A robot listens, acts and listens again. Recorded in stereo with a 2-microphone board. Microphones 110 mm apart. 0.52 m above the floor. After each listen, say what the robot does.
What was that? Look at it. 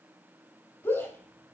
Turn 20° left.
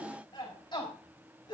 Turn 135° left.
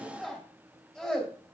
Found it: a shout, straight ahead, 2 to 4 m away.